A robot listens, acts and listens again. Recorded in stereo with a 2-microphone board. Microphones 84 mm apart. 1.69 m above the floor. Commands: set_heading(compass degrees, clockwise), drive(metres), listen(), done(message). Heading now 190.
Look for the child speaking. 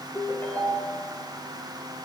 listen()
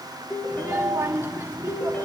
set_heading(215)
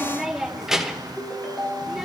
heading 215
done("Found it: a child speaking, straight ahead, under 1 m away.")